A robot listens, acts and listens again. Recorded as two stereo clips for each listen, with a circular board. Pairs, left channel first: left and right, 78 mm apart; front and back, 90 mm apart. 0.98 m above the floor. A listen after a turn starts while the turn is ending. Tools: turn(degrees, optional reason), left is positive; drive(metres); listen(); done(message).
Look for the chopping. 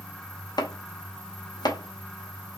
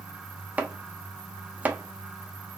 turn(degrees=105, reason="The chopping: 105° left.")
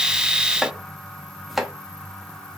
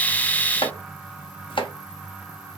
done("Found it: chopping, straight ahead.")